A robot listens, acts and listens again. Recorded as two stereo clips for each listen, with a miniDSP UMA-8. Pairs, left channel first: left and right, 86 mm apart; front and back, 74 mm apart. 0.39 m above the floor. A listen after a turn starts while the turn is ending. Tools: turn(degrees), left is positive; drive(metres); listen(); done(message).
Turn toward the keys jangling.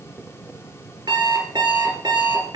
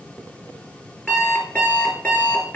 listen()
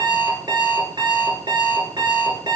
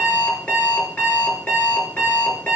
listen()
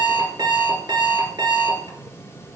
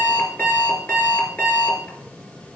done("I can't make out keys jangling, only an alarm clock.")